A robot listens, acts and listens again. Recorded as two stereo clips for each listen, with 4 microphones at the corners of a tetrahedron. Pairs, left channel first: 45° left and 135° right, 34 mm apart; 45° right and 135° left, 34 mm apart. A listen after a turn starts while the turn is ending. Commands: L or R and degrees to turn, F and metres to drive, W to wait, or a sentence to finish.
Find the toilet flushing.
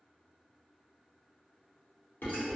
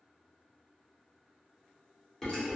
W
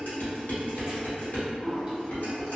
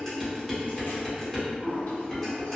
R25
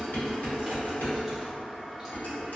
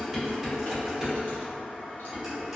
Facing the toilet flushing, 1 to 2 m away.